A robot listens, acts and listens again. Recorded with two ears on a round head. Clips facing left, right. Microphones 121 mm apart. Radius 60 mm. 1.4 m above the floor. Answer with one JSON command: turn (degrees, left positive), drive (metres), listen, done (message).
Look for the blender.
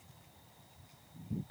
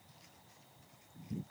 {"listen": true}
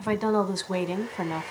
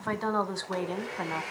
{"turn": -90}
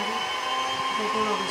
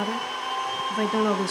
{"done": "Found it: a blender, straight ahead."}